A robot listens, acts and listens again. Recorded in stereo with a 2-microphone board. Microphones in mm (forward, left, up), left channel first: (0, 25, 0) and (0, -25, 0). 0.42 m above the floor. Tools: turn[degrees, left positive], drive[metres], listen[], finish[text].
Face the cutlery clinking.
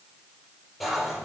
Action: turn[-30]
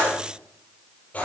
Thought: So it is at 25° left.
Action: turn[25]
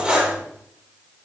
Thought: The cutlery clinking is now 20° right.
Action: turn[-20]
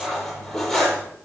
Action: finish[Found it: cutlery clinking, straight ahead, over 4 m away.]